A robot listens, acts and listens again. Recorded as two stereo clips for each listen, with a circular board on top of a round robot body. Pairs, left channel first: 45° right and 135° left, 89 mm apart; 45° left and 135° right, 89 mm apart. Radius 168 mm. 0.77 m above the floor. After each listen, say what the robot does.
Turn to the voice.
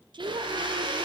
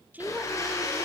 Turn 155° left.
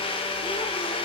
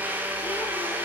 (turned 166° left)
Turn 10° right.
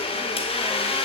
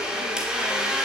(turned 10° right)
Keep listening.
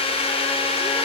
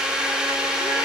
I heard a woman speaking from this way, but can't make it out now.